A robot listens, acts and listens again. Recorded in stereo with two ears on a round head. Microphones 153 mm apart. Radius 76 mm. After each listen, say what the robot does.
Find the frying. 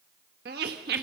Keep listening.
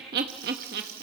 Turn 60° right.
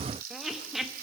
Turn 60° right.
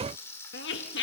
Turn 15° left.
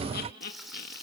Facing the frying, over 4 m away.